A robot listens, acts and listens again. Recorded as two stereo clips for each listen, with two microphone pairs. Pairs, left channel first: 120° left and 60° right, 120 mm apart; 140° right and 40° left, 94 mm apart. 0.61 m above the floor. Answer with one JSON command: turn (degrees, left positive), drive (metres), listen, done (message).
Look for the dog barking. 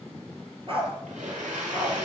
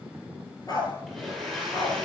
{"turn": -95}
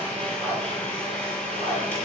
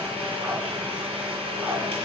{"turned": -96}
{"listen": true}
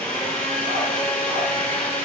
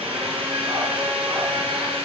{"listen": true}
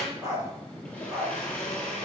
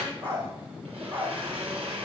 {"turn": 10}
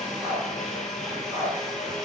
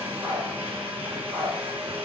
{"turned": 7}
{"done": "Facing the dog barking, over 4 m away."}